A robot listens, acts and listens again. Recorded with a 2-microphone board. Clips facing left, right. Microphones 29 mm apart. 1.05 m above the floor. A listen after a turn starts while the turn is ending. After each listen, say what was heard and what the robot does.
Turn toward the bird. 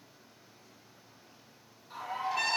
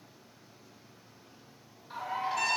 The bird: about 30° right or 150° right. Turn 30° right.
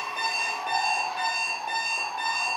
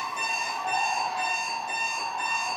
Found it: a bird, straight ahead, 1 to 2 m away.